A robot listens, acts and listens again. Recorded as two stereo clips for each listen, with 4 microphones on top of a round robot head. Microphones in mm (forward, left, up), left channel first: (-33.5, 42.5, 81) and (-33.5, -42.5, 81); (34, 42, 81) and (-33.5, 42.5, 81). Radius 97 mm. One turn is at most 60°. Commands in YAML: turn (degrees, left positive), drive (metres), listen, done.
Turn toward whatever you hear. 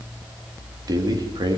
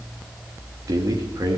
turn: -60
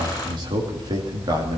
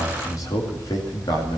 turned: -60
turn: -40
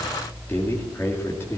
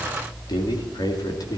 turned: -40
turn: 25
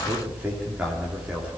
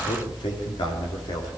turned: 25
turn: -10
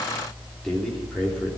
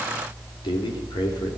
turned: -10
turn: 10
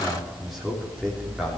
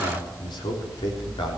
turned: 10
done: "Found it: a man speaking, straight ahead."